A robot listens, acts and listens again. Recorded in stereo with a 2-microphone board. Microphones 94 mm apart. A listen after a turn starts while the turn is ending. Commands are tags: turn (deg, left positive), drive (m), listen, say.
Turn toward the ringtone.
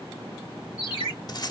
<turn deg="50"/>
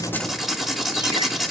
<listen/>
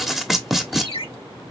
<turn deg="85"/>
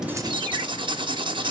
<listen/>
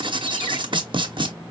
<listen/>
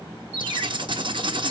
<turn deg="25"/>
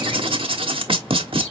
<listen/>
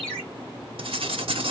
<turn deg="10"/>
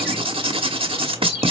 <say>Found it: a ringtone, straight ahead.</say>